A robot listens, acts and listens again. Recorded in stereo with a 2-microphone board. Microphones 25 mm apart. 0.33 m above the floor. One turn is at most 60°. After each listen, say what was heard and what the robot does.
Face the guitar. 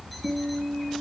The guitar: about 60° right or 120° right. Turn 60° right.
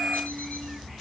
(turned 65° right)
Keep listening.
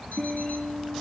Facing the guitar.